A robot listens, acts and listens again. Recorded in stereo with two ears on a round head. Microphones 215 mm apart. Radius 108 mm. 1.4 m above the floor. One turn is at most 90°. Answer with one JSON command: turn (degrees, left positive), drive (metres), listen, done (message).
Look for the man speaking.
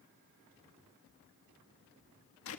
{"listen": true}
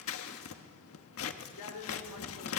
{"turn": 90}
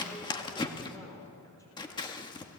{"listen": true}
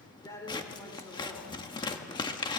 {"turn": 15}
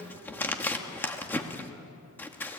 {"listen": true}
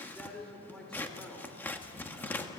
{"done": "Facing the man speaking, over 4 m away."}